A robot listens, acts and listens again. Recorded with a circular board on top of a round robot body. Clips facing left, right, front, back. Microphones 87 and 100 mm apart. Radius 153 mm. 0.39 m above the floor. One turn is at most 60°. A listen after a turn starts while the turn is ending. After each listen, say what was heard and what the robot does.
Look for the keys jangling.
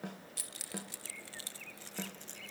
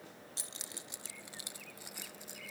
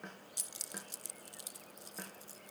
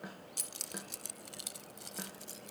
The keys jangling: 170° right. Turn 60° right.
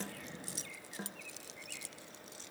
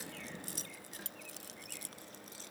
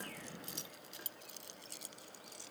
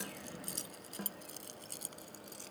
The keys jangling is now 135° right. Turn 60° right.
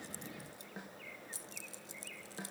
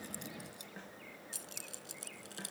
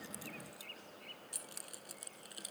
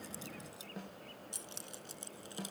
The keys jangling is now 115° right. Turn 60° right.
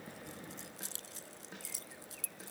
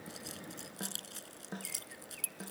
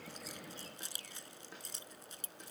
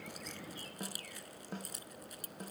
The keys jangling is now 65° right. Turn 60° right.
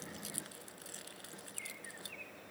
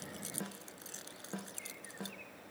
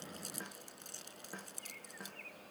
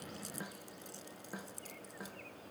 The keys jangling is now 25° right. Turn 25° right.
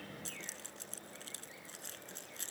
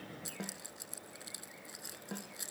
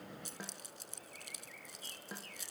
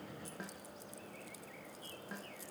The keys jangling is now 10° right. Turn 10° right.
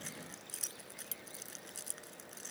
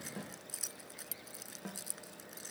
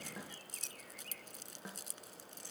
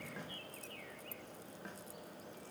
Facing the keys jangling.